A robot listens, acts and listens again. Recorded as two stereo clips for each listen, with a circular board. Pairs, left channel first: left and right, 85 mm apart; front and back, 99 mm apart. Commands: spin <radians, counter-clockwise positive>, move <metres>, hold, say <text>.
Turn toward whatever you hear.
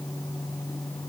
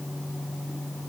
hold
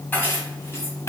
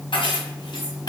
spin 0.70
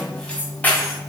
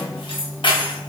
spin 0.44
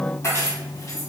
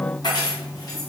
spin 0.79
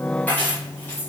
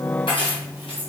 spin 0.52
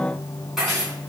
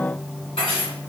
say Found it: keys jangling, straight ahead.